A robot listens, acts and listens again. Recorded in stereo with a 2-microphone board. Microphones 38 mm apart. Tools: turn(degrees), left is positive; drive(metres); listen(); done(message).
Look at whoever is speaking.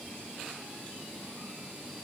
listen()
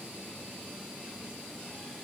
listen()
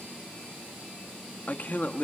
turn(degrees=45)
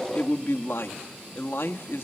turn(degrees=90)
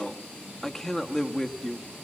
turn(degrees=10)
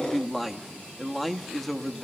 done("Found it: a man speaking, straight ahead, 1 to 2 m away.")